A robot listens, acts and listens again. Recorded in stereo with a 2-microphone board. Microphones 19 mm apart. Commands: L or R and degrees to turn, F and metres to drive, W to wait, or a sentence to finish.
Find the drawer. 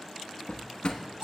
L70
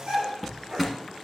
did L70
Found it: a drawer, straight ahead.